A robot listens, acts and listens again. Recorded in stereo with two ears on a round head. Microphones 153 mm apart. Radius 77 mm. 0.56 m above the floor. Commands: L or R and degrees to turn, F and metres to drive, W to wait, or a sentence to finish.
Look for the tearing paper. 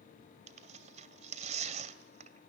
R45
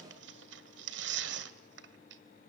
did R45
R95
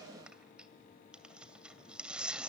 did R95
Found it: tearing paper, straight ahead.